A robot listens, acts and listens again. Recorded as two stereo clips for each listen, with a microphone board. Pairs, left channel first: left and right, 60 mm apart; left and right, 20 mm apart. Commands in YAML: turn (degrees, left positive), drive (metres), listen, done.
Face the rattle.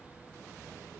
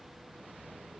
listen: true
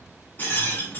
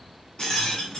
turn: 40
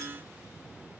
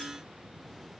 listen: true
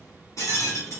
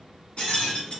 turn: 100
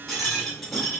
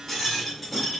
done: "Found it: a rattle, straight ahead, 2 to 4 m away."